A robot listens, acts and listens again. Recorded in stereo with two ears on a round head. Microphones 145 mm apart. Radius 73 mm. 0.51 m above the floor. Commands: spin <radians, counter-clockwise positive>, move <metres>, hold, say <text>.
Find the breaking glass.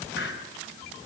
hold
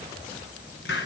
hold
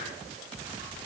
say I can't make out breaking glass, only a hiss.